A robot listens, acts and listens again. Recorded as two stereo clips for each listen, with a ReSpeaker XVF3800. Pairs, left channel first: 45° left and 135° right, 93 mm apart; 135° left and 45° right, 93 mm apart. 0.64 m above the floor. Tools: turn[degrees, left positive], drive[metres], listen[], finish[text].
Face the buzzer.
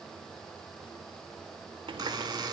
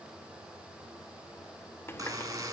Thought: The buzzer: 95° right.
Action: turn[-95]
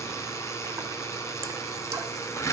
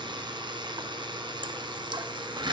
Thought: The buzzer is now 10° right.
Action: turn[-10]
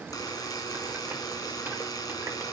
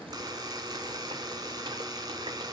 Action: finish[Facing the buzzer, 1 to 2 m away.]